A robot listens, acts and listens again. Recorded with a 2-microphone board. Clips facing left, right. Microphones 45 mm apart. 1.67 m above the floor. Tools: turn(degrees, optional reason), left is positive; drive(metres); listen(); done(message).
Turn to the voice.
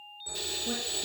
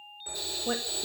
turn(degrees=-60, reason="The woman speaking: about 60° right or 120° right.")
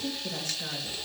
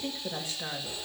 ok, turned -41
turn(degrees=-20, reason="So it is at 20° right.")
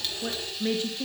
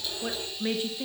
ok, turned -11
turn(degrees=-10, reason="The woman speaking is now 10° right.")
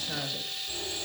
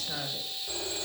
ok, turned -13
listen()
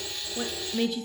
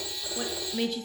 done("Found it: a woman speaking, straight ahead.")